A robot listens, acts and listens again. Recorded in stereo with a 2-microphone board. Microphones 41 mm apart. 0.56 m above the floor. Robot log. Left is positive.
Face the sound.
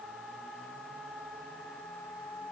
cmd idle
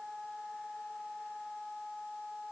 cmd idle
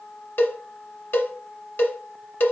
note: The cowbell: about 60° left or 120° left.
cmd yaw +60
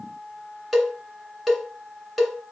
end: Found it: a cowbell, straight ahead, 1 to 2 m away.